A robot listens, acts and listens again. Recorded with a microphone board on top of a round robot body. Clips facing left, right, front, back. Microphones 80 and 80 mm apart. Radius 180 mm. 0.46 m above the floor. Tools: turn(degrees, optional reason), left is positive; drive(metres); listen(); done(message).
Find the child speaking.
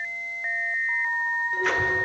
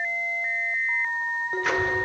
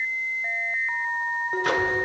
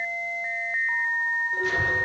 turn(degrees=155, reason="The child speaking: 155° left.")
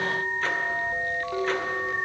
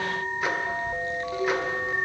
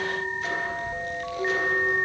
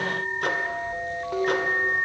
turn(degrees=-20, reason="The child speaking is now 20° right.")
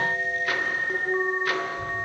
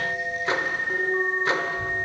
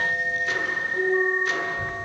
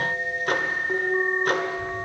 turn(degrees=-15, reason="The child speaking is now 15° right.")
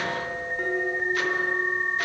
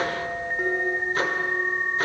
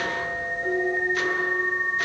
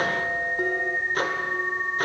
done("Found it: a child speaking, straight ahead, over 4 m away.")